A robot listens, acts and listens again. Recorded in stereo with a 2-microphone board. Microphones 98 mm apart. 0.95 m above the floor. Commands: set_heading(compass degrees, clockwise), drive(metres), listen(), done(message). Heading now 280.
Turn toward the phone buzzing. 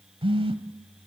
set_heading(345)
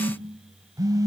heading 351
set_heading(31)
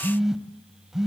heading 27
done("Found it: a phone buzzing, straight ahead.")